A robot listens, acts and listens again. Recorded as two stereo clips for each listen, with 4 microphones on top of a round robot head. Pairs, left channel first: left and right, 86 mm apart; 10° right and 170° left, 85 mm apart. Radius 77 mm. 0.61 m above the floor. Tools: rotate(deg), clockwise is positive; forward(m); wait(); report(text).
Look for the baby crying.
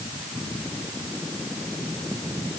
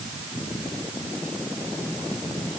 wait()
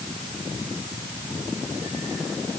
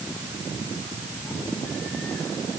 wait()
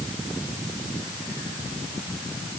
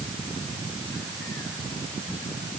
report("I can't make out a baby crying.")